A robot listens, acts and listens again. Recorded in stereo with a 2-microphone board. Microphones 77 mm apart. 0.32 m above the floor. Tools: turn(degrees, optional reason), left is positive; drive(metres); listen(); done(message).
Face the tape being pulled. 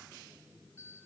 listen()
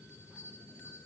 listen()
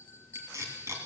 turn(degrees=-40, reason="The tape being pulled: about 40° right or 140° right.")
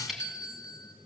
done("Facing the tape being pulled.")